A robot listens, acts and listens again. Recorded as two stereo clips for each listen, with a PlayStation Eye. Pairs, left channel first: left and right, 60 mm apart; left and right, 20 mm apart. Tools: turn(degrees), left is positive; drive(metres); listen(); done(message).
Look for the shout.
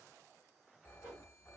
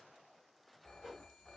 listen()
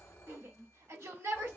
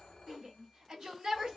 turn(degrees=-50)
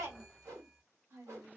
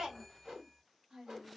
turn(degrees=-65)
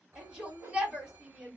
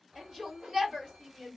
turn(degrees=-15)
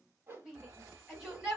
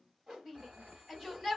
done("Facing the shout, 1 to 2 m away.")